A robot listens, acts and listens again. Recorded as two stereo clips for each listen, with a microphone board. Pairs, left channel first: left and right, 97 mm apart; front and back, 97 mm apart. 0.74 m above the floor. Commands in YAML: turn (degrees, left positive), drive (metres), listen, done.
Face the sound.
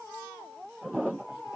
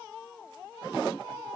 listen: true
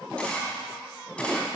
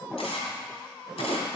turn: 10
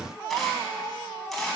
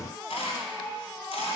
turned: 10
done: "Found it: a camera shutter, straight ahead, 2 to 4 m away."